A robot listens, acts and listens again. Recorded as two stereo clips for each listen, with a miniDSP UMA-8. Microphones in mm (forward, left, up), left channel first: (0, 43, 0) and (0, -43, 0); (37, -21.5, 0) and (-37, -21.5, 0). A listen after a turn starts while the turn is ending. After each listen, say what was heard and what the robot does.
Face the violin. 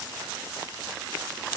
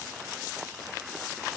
Keep listening.
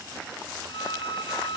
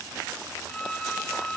The violin: 80° left. Turn 80° left.
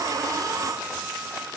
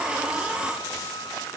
Keep listening.
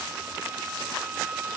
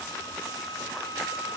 The violin is now 15° right. Turn 15° right.
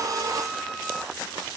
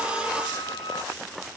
Keep listening.
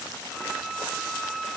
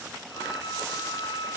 Found it: a violin, straight ahead.